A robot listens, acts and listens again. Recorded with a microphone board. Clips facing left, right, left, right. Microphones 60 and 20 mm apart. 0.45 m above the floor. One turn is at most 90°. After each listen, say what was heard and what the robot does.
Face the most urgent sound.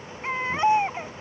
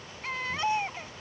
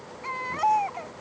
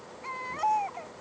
The baby crying: about 25° left or 155° left. Turn 25° left.
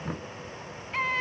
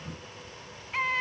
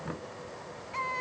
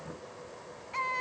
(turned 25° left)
Found it: a baby crying, straight ahead.